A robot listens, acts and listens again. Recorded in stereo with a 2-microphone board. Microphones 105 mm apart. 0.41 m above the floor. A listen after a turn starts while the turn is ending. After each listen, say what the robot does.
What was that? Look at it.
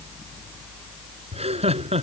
Turn 90° right.
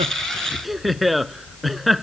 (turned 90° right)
Facing the laughter.